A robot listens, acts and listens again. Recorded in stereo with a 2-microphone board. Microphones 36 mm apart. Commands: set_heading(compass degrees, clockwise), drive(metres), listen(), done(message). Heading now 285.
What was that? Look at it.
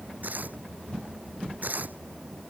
set_heading(345)
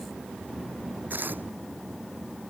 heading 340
set_heading(50)
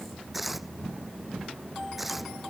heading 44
done("Facing the tearing paper.")